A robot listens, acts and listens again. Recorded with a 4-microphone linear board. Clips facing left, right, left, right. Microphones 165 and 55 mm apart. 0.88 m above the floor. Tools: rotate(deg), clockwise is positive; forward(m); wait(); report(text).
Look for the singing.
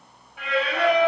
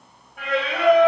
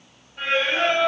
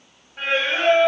rotate(50)
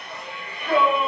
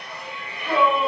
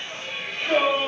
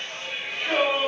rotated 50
rotate(10)
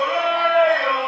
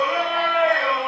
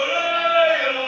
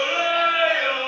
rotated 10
report("Facing the singing.")